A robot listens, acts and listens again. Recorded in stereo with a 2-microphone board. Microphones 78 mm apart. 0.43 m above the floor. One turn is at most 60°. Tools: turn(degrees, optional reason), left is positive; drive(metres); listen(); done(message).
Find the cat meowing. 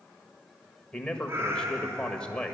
turn(degrees=-35, reason="The cat meowing: about 35° right or 145° right.")
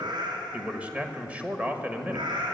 turn(degrees=-60, reason="So it is at 100° right.")
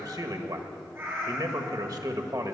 turn(degrees=-25, reason="The cat meowing is now 25° right.")
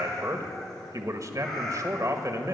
done("Found it: a cat meowing, straight ahead, over 4 m away.")